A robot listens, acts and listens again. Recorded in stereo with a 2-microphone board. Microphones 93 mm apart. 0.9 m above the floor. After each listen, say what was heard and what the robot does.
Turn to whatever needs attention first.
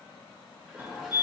The fire alarm: about 25° right or 155° right. Turn 25° right.
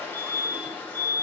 So it is at 125° right. Turn 125° right.
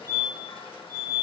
The fire alarm is now 40° right. Turn 40° right.
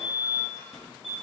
Found it: a fire alarm, straight ahead, 2 to 4 m away.